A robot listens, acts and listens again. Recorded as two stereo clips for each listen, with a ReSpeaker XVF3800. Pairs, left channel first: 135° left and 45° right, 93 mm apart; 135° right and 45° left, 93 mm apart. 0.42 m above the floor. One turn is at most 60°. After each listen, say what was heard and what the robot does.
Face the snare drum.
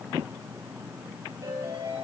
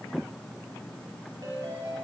Keep listening.
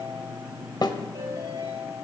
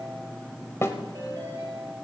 The snare drum: 165° left. Turn 60° left.
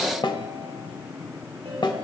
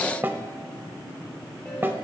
The snare drum is now 110° left. Turn 60° left.
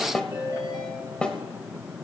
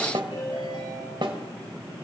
The snare drum is now 55° left. Turn 55° left.
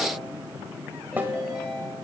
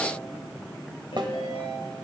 The snare drum is now 25° left. Turn 25° left.
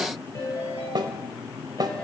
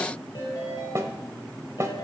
The snare drum is now 10° right. Turn 10° right.
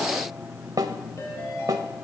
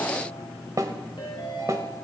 Found it: a snare drum, straight ahead, 1 to 2 m away.